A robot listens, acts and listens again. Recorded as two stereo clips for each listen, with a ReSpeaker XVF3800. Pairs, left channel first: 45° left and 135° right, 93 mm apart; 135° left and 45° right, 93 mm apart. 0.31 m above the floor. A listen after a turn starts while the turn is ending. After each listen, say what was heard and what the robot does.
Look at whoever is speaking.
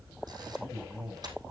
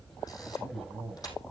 The man speaking: 45° right. Turn 45° right.
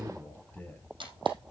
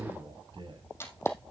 The man speaking is now 30° right. Turn 30° right.
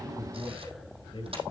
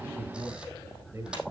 The man speaking is now 10° left. Turn 10° left.
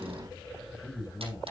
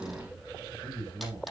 Facing the man speaking.